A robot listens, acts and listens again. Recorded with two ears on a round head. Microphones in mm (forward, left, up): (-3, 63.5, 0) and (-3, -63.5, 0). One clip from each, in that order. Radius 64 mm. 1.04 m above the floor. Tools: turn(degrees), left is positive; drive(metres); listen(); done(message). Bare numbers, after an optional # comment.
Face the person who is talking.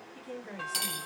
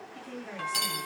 turn(-30)
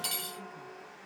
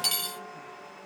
listen()
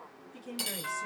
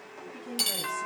# So it is at 25° left.
turn(25)
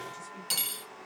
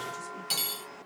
listen()
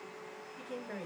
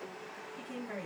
done("Found it: a woman speaking, straight ahead, 1 to 2 m away.")